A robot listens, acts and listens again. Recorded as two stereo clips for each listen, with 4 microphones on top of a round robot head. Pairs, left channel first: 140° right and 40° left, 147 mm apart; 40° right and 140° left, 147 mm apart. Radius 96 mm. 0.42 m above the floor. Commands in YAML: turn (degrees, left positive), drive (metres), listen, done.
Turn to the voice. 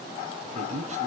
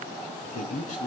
done: "Found it: a man speaking, straight ahead, over 4 m away."